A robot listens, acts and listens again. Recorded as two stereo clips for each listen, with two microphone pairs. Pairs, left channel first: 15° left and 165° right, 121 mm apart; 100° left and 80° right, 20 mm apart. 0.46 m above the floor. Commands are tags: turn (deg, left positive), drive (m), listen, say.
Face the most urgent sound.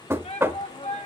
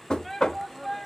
<turn deg="25"/>
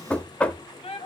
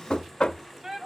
<turn deg="-10"/>
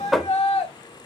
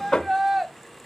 <say>Found it: a shout, straight ahead, 1 to 2 m away.</say>